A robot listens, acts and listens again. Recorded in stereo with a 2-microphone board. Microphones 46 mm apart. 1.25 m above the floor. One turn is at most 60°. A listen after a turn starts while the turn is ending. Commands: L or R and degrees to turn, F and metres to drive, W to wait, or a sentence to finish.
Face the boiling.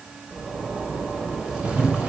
R30
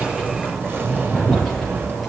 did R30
Facing the boiling, over 4 m away.